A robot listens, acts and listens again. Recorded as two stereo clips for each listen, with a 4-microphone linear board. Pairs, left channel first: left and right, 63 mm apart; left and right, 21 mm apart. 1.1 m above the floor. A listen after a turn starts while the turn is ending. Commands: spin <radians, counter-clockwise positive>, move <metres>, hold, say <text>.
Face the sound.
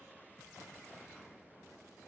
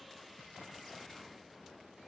hold
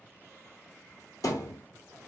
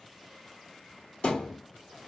spin 1.13
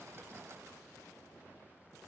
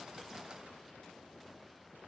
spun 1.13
hold
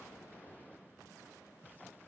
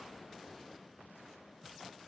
say I heard a thud, but can't make it out now. It was about straight ahead or 50° left.